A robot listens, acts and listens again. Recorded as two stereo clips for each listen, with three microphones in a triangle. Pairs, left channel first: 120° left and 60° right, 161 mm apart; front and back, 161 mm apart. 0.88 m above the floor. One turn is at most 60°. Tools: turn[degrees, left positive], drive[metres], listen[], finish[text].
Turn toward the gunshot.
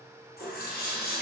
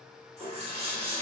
Action: listen[]
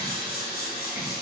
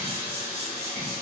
Action: listen[]
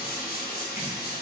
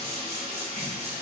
Action: finish[I can't make out a gunshot to turn to.]